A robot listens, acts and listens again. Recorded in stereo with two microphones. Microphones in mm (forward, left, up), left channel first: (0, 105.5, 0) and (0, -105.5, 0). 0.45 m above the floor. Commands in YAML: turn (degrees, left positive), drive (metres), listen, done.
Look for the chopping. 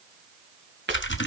turn: -55
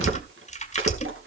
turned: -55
listen: true
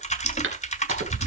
turn: -70
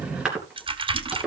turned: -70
done: "Found it: chopping, straight ahead."